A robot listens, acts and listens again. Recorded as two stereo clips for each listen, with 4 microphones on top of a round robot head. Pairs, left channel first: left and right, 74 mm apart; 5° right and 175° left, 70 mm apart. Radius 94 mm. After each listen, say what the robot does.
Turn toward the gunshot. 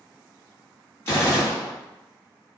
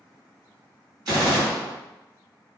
Turn 145° left.
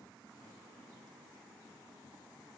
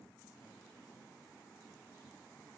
I heard a gunshot from this way, but can't make it out now.